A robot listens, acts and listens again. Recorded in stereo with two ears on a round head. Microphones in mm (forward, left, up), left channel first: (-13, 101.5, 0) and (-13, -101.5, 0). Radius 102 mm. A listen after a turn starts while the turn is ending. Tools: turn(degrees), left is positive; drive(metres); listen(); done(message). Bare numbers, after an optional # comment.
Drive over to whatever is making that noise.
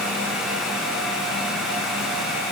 listen()
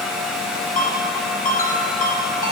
# The ringtone: about 45° left or 135° left.
turn(45)
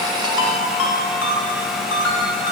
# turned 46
# So it is at 90° left.
turn(90)
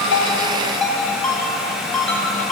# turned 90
drive(1.0)
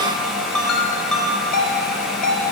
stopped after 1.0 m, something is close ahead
done("Blocked. The ringtone is further on, straight ahead.")